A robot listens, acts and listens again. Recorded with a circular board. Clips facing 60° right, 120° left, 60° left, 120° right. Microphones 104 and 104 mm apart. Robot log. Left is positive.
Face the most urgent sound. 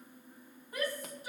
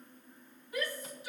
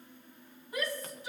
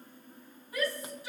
end: Found it: a shout, straight ahead, over 4 m away.